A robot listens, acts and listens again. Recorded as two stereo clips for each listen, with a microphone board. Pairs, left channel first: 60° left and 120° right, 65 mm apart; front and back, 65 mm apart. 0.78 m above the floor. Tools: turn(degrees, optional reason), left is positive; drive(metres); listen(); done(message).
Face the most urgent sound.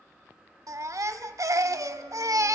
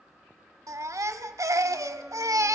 turn(degrees=-150, reason="The baby crying: 150° right.")
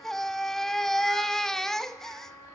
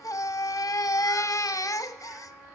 turn(degrees=-25, reason="The baby crying is now 25° right.")
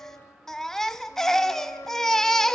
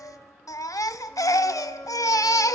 turn(degrees=-25, reason="The baby crying is now 25° right.")
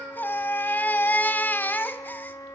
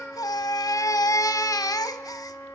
done("Found it: a baby crying, straight ahead, under 1 m away.")